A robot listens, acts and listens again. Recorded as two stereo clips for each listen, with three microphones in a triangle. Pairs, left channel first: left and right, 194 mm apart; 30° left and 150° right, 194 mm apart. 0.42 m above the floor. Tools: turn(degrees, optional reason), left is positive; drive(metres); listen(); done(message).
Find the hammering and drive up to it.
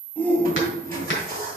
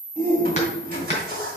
turn(degrees=85, reason="The hammering: 85° left.")
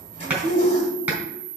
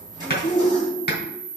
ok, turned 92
turn(degrees=-10, reason="The hammering is now 10° right.")
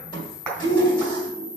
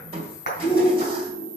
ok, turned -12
drive(metres=1.0)
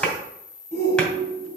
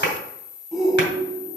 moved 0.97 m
drive(metres=1.0)
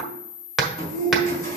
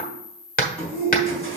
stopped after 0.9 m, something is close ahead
done("Arrived at the hammering, straight ahead.")